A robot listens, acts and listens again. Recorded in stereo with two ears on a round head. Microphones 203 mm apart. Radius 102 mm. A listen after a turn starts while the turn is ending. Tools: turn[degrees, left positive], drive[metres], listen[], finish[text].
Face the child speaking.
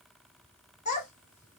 Thought: The child speaking: about 30° left or 150° left.
Action: turn[30]
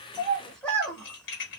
Action: finish[Facing the child speaking.]